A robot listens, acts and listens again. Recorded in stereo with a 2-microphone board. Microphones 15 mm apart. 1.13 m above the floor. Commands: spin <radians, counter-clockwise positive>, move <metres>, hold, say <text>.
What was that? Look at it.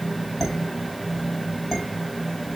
spin 0.52
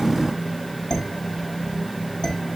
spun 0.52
spin 2.53
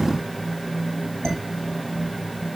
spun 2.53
spin 0.79
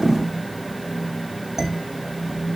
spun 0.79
spin -0.52
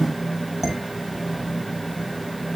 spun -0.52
say Found it: dishes clattering, straight ahead.